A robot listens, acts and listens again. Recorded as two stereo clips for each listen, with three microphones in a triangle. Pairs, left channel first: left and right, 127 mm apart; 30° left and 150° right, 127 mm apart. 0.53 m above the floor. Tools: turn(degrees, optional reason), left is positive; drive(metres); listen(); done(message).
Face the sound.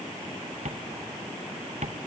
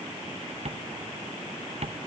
turn(degrees=-115, reason="The tapping: 115° right.")
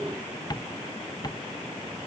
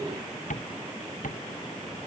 turn(degrees=30, reason="The tapping is now 30° left.")
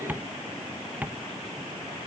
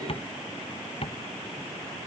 turn(degrees=-10, reason="The tapping is now 10° right.")
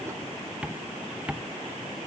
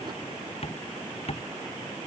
turn(degrees=-10, reason="The tapping is now 10° right.")
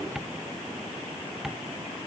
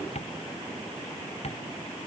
done("Facing the tapping.")